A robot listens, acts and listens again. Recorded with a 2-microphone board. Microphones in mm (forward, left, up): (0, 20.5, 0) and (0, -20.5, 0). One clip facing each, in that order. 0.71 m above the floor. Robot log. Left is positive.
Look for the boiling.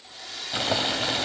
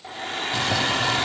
note: The boiling: about 25° left or 155° left.
cmd yaw +25
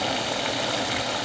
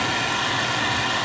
note: So it is at 130° left.
cmd yaw +130
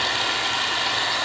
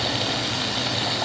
note: The boiling is now 20° right.
cmd yaw -20
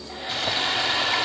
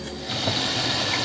end: Facing the boiling, 2 to 4 m away.